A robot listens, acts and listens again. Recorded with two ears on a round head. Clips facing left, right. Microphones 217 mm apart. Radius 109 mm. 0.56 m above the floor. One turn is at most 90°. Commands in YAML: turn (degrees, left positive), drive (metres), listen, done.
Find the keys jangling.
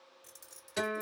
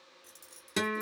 turn: 30
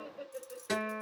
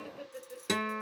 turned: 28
turn: 30
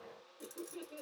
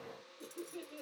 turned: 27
turn: 90
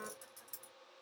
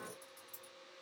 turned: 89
turn: 75
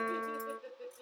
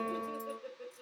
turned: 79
listen: true
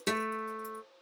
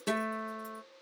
listen: true
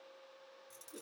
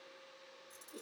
turn: 20
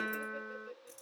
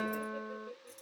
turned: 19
done: "Facing the keys jangling, 2 to 4 m away."